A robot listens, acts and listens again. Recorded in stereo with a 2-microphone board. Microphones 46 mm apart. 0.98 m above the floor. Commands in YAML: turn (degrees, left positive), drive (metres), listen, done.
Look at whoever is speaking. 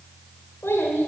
turn: 60
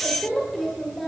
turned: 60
done: "Found it: a child speaking, straight ahead, 2 to 4 m away."